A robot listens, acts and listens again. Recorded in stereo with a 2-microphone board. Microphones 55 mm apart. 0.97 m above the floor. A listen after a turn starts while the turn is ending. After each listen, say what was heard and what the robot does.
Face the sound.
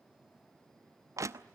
The crushing: about 70° right or 110° right. Turn 70° right.
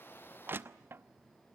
So it is at 40° right. Turn 40° right.
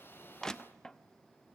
The crushing is now 15° left. Turn 15° left.
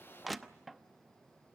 Facing the crushing, under 1 m away.